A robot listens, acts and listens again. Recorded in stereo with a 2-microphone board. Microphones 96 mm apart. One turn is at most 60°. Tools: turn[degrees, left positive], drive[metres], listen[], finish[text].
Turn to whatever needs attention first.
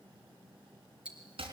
Action: listen[]
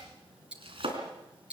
Action: listen[]
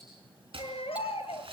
Action: turn[60]
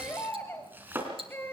Thought: So it is at 25° left.
Action: turn[25]
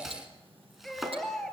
Action: finish[Facing the baby crying, 2 to 4 m away.]